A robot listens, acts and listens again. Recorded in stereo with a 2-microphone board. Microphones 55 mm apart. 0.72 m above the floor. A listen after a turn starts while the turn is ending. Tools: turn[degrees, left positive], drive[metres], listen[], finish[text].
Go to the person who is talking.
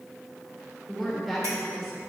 Action: turn[30]
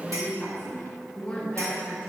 Thought: So it is at 150° left.
Action: turn[150]
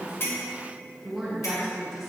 Action: drive[1.0]
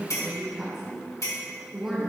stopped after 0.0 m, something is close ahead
Action: finish[Blocked. The woman speaking is further on, straight ahead.]